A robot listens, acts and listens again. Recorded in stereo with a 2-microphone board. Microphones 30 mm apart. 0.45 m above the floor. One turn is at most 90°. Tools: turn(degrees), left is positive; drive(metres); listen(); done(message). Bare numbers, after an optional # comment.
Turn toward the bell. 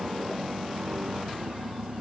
listen()
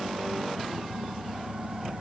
listen()
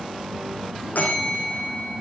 turn(90)
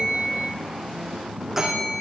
# So it is at 15° right.
turn(-15)
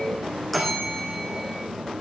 done("Facing the bell, over 4 m away.")